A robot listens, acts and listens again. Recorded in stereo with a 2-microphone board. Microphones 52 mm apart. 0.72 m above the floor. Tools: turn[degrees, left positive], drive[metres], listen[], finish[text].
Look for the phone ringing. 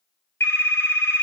Thought: The phone ringing: about 65° left or 115° left.
Action: turn[65]
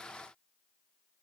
Action: listen[]
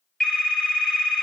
Thought: So it is at 10° left.
Action: turn[10]
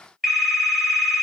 Action: finish[Found it: a phone ringing, straight ahead.]